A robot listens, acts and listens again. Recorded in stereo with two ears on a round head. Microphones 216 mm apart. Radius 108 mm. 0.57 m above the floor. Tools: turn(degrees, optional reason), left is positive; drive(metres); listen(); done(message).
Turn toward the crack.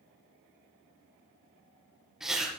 listen()
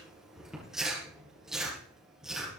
listen()
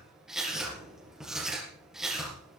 done("I can't make out a crack to turn to.")